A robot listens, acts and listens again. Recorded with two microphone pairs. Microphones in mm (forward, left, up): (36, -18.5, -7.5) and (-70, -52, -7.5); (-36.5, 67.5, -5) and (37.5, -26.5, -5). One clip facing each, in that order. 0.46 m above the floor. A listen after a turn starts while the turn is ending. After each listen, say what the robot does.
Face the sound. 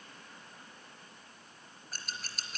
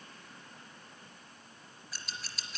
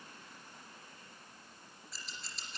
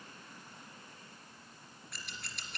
Turn 25° right.
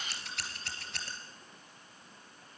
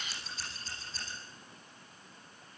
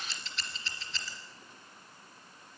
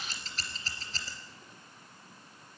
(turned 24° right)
Facing the scissors, 2 to 4 m away.